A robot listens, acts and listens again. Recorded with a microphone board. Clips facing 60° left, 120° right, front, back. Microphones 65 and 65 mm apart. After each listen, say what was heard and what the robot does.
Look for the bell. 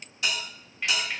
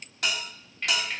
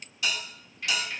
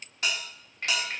The bell: 140° right. Turn 140° right.
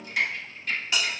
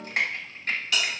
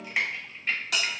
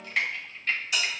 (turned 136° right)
Facing the bell, 1 to 2 m away.